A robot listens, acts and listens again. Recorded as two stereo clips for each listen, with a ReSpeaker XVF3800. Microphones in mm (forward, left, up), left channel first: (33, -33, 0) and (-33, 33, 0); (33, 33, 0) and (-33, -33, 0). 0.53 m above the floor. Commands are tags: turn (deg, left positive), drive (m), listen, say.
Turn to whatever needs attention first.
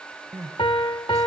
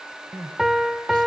<turn deg="-175"/>
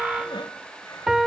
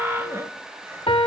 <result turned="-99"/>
<turn deg="-75"/>
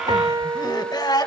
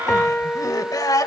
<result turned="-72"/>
<say>Found it: crying, straight ahead, 1 to 2 m away.</say>